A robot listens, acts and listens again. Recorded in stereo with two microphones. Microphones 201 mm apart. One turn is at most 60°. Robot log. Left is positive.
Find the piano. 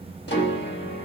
note: The piano: about 60° left or 120° left.
cmd yaw +60
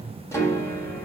note: So it is at 15° left.
cmd yaw +15
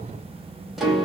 end: Found it: a piano, straight ahead, 1 to 2 m away.